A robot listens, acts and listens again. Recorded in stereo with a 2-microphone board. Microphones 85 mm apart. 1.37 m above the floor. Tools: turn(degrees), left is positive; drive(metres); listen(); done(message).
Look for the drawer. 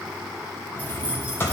turn(degrees=30)
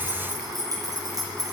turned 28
listen()
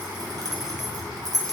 listen()
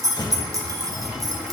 turn(degrees=120)
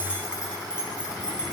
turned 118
listen()
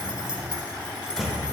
done("Found it: a drawer, straight ahead, 1 to 2 m away.")